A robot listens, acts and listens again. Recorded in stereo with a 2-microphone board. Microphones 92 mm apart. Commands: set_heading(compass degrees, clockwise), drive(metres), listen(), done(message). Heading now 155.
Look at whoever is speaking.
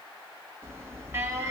listen()
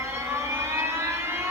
listen()
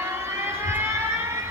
set_heading(85)
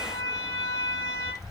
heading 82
set_heading(47)
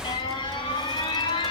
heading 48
done("Facing the child speaking.")